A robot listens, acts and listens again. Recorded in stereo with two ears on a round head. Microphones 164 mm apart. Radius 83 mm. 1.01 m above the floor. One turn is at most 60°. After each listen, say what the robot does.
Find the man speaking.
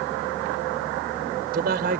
Turn 50° right.
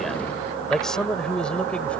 Facing the man speaking.